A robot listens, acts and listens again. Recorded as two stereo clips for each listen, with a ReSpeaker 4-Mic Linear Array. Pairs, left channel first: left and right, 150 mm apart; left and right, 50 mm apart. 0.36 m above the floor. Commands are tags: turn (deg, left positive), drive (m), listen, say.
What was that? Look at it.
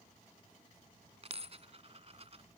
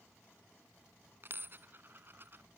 <turn deg="-45"/>
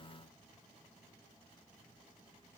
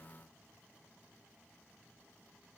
<listen/>
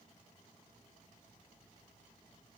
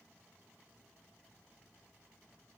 <say>I heard a dropped coin, but can't make it out now. It was about straight ahead or 90° right.</say>